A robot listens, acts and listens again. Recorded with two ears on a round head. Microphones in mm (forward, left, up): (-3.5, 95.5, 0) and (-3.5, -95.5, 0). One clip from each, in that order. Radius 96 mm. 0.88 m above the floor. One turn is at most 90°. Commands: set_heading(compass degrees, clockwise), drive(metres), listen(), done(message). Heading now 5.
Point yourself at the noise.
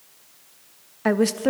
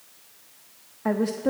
set_heading(300)
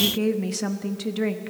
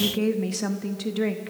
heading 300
done("Found it: a woman speaking, straight ahead.")